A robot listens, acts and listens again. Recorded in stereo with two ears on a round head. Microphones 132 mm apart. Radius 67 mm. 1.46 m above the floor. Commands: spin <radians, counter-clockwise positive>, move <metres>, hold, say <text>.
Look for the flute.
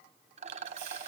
hold
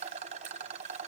hold
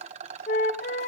spin 1.05
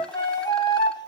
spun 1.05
spin 0.52
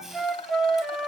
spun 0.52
say Facing the flute, 1 to 2 m away.